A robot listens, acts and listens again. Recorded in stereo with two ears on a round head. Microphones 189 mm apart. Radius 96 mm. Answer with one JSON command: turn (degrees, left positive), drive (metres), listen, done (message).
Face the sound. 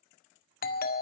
{"turn": 45}
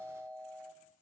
{"done": "Found it: a doorbell, straight ahead, 1 to 2 m away."}